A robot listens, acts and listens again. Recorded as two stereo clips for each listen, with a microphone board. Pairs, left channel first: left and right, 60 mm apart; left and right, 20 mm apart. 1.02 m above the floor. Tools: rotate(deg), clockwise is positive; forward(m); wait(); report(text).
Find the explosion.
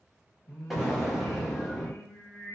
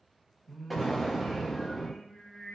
rotate(30)
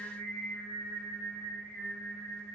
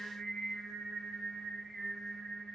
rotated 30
wait()
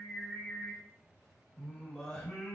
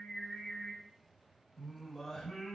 report("I heard an explosion, but can't make it out now. It was about 25° left or 145° right.")